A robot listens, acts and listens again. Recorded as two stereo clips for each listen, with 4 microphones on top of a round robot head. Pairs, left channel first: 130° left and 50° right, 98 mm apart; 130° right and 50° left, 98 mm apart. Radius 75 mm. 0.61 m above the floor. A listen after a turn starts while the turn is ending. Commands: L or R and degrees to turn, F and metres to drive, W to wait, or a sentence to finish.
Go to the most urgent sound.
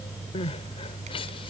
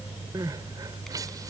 L100
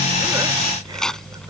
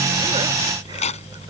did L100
W
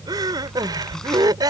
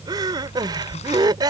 F1.0
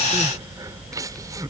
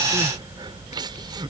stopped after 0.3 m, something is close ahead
Something is in my way. I am facing the crying but have not reached it.